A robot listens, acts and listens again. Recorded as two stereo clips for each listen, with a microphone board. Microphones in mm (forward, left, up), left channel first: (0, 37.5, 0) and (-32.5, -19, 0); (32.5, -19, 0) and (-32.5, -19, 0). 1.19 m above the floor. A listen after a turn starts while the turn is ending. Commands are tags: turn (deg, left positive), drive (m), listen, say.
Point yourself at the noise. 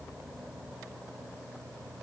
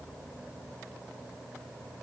<listen/>
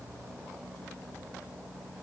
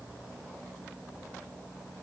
<listen/>
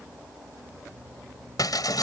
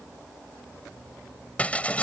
<turn deg="70"/>
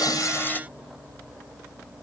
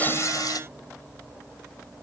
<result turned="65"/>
<say>I heard breaking glass from this way, but can't make it out now.</say>